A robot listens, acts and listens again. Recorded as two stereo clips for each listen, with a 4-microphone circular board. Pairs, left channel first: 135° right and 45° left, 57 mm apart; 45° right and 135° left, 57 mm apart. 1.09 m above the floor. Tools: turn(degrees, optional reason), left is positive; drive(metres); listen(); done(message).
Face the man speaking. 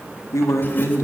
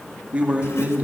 turn(degrees=-165, reason="The man speaking: 165° right.")
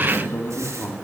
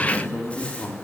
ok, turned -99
turn(degrees=-90, reason="The man speaking is now 90° right.")
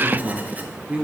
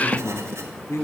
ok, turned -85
turn(degrees=-20, reason="The man speaking is now 20° right.")
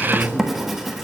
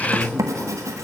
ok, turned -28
done("Facing the man speaking.")